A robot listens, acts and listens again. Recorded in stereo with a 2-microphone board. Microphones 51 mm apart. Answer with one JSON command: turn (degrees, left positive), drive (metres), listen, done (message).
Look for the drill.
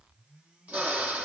{"turn": -35}
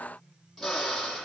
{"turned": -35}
{"done": "Found it: a drill, straight ahead, over 4 m away."}